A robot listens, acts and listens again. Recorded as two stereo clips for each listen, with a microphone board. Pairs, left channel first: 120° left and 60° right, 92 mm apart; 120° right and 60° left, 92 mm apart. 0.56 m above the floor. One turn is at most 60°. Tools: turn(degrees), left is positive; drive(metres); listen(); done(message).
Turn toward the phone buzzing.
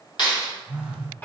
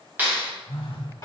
turn(degrees=-60)
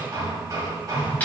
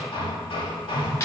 turn(degrees=-60)
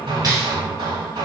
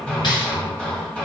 turn(degrees=-20)
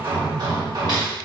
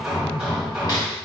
listen()
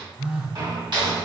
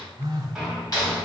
turn(degrees=15)
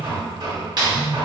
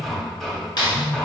done("Found it: a phone buzzing, straight ahead, 1 to 2 m away.")